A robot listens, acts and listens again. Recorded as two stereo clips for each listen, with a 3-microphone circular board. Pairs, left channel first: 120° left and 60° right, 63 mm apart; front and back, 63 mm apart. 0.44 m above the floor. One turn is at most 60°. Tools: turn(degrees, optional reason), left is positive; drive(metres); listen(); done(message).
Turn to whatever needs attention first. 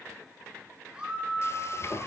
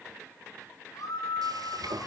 turn(degrees=15, reason="The scream: 15° left.")
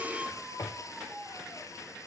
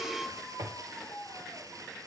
done("Found it: a scream, straight ahead, over 4 m away.")